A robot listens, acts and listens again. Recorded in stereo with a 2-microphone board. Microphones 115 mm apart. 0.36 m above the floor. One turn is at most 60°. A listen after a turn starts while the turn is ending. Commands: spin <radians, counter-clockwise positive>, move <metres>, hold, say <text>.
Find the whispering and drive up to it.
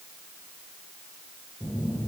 hold
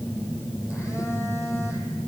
hold
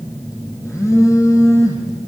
say I can't make out whispering, only a phone buzzing.